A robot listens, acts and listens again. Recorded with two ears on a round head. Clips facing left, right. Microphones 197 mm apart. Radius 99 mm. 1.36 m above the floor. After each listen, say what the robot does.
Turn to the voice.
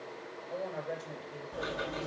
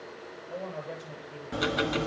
Turn 30° left.
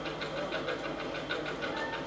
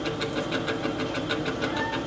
Keep listening.
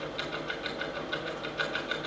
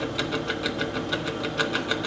Keep listening.
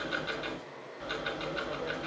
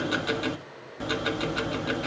I heard a woman speaking, but can't make it out now. It was about 25° right or 145° left.